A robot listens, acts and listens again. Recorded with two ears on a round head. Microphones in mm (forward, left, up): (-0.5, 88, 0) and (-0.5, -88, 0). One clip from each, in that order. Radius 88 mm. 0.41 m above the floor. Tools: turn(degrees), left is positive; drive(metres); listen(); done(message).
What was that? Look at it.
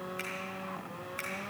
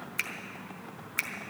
turn(degrees=-45)
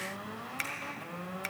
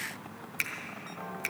done("Facing the finger snap.")